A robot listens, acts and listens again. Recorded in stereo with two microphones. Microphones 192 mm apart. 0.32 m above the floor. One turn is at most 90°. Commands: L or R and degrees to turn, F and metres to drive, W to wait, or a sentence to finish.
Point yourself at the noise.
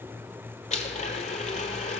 L35
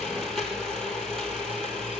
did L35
Facing the blender, 1 to 2 m away.